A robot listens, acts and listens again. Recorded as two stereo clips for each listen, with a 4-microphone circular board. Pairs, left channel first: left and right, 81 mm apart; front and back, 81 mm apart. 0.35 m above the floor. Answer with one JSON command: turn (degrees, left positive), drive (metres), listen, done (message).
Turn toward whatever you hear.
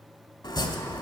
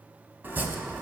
{"turn": 115}
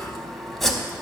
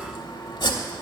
{"done": "Facing the chopping."}